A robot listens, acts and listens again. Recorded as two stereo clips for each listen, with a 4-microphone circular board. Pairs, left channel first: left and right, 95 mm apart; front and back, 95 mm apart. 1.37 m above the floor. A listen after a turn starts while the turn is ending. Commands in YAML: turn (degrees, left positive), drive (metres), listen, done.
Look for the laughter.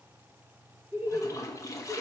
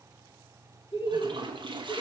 turn: -25
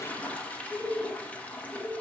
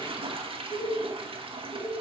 turn: -20
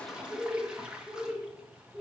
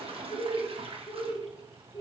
done: "Found it: laughter, straight ahead."